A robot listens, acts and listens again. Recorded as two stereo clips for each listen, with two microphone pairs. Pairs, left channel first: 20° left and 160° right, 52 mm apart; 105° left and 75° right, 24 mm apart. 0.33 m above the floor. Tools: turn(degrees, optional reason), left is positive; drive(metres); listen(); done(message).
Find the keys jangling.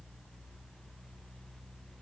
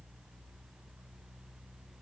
listen()
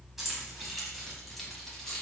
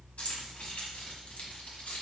turn(degrees=95, reason="The keys jangling: 95° left.")
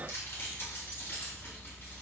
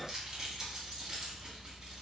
turn(degrees=-20, reason="The keys jangling is now 20° right.")
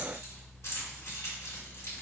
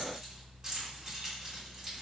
turn(degrees=-10, reason="The keys jangling is now 10° right.")
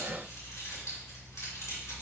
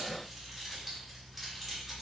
listen()
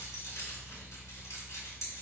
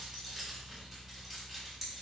done("Found it: keys jangling, straight ahead.")